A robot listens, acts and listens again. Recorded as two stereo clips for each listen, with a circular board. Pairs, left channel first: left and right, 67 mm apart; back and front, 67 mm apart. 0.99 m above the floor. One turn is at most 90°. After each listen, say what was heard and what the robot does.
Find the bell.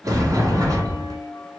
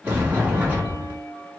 The bell: 125° left. Turn 90° left.
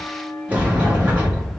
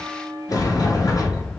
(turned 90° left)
The bell is now 30° left. Turn 30° left.
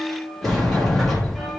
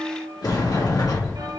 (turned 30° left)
Facing the bell, under 1 m away.